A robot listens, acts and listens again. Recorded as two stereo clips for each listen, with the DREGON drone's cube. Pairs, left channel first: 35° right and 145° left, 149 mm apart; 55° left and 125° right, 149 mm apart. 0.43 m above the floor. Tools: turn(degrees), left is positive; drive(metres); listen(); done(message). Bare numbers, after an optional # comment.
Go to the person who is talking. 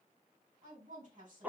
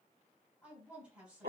# The woman speaking: 155° left.
turn(155)
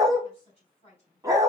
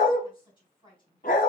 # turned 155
drive(1.0)
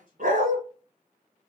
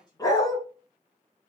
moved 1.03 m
# The woman speaking is now 10° left.
turn(10)
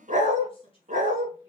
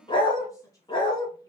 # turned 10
drive(1.0)
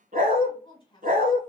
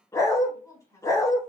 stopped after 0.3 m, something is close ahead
done("I am next to the woman speaking.")